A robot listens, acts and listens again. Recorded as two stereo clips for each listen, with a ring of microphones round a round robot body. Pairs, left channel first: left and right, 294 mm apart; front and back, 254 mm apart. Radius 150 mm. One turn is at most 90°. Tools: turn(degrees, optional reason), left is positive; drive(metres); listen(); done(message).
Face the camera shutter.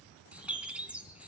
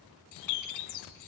listen()
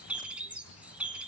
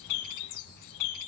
listen()
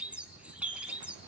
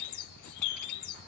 done("I can't make out a camera shutter to turn to.")